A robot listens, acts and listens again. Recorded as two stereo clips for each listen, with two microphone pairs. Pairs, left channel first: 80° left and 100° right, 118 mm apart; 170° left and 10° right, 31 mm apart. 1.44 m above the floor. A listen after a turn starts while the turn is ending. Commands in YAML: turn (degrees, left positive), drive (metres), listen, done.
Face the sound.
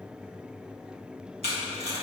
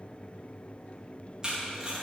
turn: -75
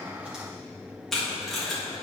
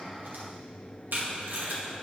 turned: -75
done: "Facing the tape being pulled, 1 to 2 m away."